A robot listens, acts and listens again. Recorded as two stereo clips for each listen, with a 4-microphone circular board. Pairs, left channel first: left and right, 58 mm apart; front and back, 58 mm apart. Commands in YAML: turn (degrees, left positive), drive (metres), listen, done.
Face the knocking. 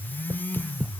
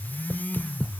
turn: -55
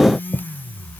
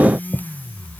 done: "Found it: knocking, straight ahead."